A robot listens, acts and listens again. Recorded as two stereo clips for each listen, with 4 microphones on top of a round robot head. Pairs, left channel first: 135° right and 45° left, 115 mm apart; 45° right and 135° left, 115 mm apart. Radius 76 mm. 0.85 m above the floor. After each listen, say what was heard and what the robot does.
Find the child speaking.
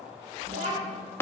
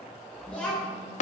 The child speaking: 35° left. Turn 35° left.
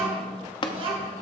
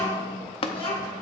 Facing the child speaking.